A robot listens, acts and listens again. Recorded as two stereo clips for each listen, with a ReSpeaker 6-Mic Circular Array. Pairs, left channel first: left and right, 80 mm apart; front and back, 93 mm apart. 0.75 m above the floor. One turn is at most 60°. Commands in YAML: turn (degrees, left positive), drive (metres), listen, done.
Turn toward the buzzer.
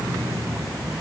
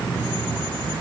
listen: true
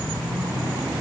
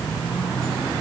listen: true
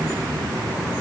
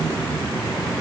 done: "I can't make out a buzzer to turn to."